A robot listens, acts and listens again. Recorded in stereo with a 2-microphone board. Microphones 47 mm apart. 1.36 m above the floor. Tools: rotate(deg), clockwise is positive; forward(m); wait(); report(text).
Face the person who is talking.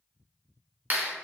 wait()
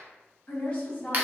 rotate(-30)
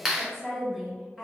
report("Found it: a woman speaking, straight ahead, 1 to 2 m away.")